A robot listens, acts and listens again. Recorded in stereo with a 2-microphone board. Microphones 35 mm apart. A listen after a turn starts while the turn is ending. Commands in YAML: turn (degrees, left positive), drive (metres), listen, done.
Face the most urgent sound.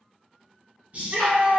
turn: -40
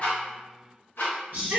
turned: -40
turn: -95
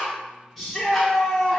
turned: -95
done: "Found it: a shout, straight ahead, 1 to 2 m away."